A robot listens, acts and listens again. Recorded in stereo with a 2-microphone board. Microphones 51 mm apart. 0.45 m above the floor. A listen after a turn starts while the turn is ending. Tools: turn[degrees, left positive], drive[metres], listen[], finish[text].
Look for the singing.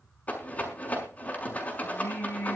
Thought: The singing: about 50° left or 130° left.
Action: turn[50]
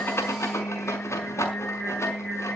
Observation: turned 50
Action: finish[Facing the singing.]